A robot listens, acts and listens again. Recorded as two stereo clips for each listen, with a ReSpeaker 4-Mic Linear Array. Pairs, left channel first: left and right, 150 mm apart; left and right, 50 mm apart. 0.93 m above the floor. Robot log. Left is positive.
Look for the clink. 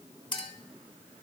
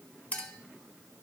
note: The clink: about 35° left or 145° left.
cmd yaw +35
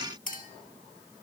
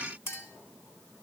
note: So it is at 110° left.
cmd yaw +110
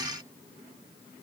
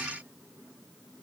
cmd idle
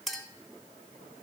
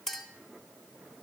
end: Found it: a clink, straight ahead, 1 to 2 m away.